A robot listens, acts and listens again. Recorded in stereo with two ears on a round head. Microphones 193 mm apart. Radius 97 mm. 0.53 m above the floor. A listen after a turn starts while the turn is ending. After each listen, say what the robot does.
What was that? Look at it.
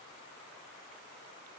Keep listening.
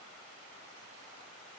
Keep listening.
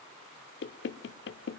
Turn 55° left.
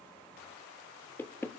Turn 10° left.
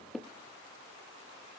Facing the knocking.